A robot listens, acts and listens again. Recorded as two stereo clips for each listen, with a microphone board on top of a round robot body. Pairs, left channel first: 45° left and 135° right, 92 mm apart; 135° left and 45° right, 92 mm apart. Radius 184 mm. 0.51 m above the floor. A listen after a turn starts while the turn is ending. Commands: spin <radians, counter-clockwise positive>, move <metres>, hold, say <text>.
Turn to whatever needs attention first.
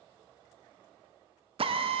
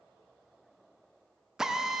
hold
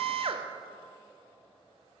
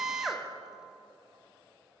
hold
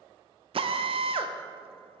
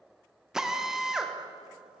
say I can't make out anything urgent, only a drill.